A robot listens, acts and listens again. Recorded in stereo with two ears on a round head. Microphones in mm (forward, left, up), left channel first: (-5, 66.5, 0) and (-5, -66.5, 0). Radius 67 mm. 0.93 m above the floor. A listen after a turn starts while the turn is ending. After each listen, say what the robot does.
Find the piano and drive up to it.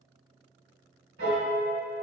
Turn 90° right.
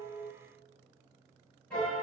Turn 10° left.
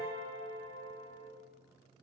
Drive 1.0 m forward.
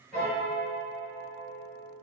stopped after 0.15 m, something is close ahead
Blocked. The piano is further on, straight ahead.